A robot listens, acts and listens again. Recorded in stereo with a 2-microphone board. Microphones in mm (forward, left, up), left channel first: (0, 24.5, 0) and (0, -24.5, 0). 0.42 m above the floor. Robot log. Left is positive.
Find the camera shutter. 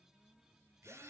cmd idle
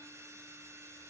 cmd idle
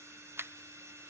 note: The camera shutter: about 55° right or 125° right.
cmd yaw -55
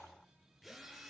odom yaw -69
cmd idle
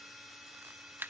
note: So it is at 50° right.
cmd yaw -50
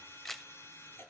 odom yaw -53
end: Facing the camera shutter.